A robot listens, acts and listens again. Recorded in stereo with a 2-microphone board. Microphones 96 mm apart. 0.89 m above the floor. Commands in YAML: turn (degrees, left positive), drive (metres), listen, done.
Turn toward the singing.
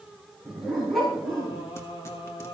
turn: 75
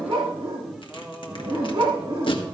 turn: -15
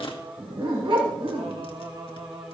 turn: -55
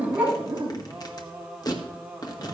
turn: -10
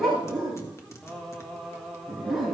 done: "Facing the singing, 1 to 2 m away."